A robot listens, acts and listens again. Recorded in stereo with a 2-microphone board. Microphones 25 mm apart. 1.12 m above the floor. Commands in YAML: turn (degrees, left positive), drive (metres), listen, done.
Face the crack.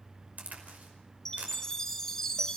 turn: -90
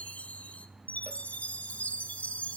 done: "I heard a crack from this way, but can't make it out now."